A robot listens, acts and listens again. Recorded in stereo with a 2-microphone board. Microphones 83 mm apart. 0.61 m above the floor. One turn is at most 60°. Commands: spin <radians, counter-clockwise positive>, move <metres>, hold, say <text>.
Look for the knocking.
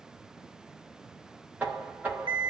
spin -0.35
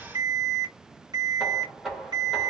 say Found it: knocking, straight ahead, 1 to 2 m away.